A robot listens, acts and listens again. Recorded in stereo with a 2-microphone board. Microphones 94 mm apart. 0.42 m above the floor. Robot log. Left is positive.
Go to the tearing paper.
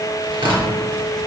note: The tearing paper: about 65° right or 115° right.
cmd yaw -65
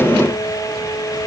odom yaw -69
cmd idle
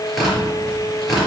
cmd fwd 1.0
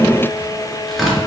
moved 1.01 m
cmd fwd 1.0
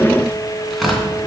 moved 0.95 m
cmd fwd 1.0
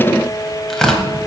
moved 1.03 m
cmd fwd 1.0
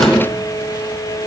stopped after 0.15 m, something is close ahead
cmd idle
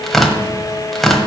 end: I am next to the tearing paper.